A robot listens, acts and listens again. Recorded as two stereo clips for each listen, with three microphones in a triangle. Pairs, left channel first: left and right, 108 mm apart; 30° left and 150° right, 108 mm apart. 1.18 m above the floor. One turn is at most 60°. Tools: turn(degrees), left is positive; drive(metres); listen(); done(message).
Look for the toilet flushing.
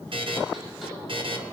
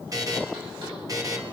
listen()
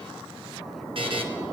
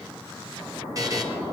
listen()
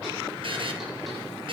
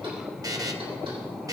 done("I can't make out a toilet flushing to turn to.")